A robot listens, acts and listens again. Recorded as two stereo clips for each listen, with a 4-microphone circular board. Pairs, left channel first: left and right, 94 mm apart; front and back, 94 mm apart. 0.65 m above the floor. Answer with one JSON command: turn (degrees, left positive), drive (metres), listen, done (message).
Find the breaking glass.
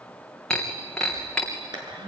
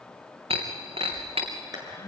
{"turn": 175}
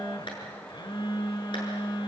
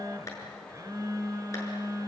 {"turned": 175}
{"done": "I heard breaking glass from this way, but can't make it out now."}